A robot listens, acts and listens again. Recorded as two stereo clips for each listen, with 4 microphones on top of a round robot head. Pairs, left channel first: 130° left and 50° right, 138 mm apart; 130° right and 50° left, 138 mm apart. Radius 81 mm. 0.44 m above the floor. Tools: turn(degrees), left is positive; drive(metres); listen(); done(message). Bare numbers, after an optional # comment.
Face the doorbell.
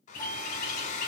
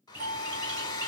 # The doorbell: 65° left.
turn(65)
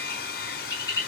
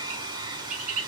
listen()
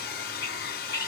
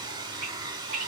listen()
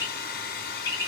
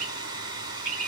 done("Facing where the doorbell came from. I can't hear it now.")